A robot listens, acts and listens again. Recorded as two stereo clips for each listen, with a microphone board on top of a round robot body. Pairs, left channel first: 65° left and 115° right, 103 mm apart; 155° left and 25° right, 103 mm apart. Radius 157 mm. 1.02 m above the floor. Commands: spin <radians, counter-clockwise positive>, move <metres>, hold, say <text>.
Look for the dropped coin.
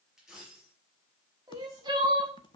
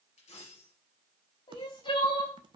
spin 2.79
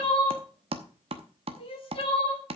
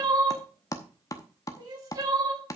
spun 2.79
say I heard a dropped coin from this way, but can't make it out now.